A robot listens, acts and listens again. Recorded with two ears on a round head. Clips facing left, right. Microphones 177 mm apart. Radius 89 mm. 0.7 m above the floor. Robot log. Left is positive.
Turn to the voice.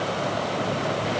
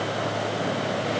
cmd idle
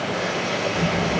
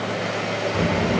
cmd yaw -90
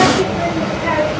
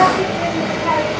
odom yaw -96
note: So it is at 15° left.
cmd yaw +15
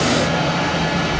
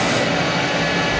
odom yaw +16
end: Facing the child speaking, 2 to 4 m away.